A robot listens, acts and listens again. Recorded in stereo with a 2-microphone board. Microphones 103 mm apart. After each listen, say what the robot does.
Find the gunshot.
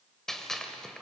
Turn 30° left.
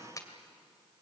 Turn 145° left.
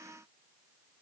I heard a gunshot from this way, but can't make it out now.